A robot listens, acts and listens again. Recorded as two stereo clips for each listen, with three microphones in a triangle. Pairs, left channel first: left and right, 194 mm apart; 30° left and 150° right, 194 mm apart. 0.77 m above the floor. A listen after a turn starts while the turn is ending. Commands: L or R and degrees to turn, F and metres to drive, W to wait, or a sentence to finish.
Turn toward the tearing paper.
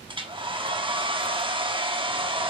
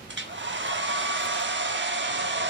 W
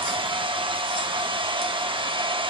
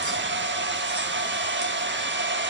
W
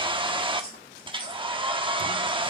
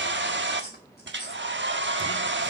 L55
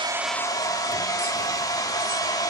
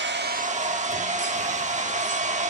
W
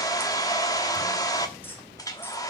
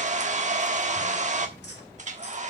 L10
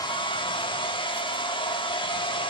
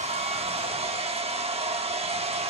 W
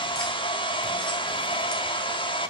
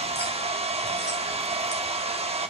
W
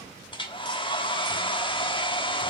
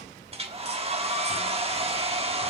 I heard tearing paper from this way, but can't make it out now.